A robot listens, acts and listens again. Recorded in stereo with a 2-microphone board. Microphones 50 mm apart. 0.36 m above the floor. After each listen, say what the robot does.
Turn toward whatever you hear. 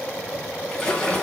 Turn 30° left.
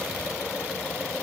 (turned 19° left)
Keep listening.
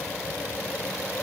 I heard a splash, but can't make it out now. It was about 5° right or 150° left.